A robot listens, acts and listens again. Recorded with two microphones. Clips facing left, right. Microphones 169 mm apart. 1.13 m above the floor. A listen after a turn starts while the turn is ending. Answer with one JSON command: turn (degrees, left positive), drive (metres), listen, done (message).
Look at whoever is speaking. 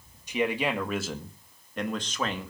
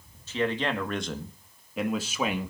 {"turn": -30}
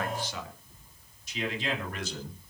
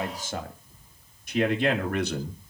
{"turn": -115}
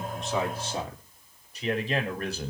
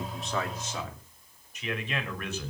{"turn": 35}
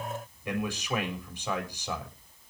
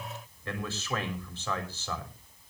{"turn": 15}
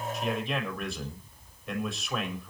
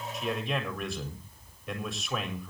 {"done": "Facing the man speaking."}